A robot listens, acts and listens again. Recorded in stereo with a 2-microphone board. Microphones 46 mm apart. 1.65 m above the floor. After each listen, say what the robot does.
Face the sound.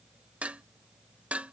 Turn 25° right.
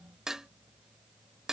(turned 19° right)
Turn 10° right.
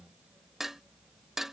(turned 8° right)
Found it: dishes clattering, straight ahead.